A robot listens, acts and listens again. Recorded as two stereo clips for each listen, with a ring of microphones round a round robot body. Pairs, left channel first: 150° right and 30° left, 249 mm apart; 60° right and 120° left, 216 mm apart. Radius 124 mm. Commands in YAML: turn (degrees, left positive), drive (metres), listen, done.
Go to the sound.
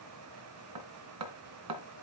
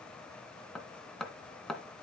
turn: 30
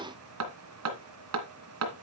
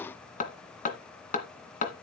drive: 1.0
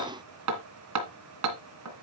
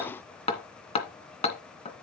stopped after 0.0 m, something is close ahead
done: "Something is in my way. I am facing the hammering but have not reached it."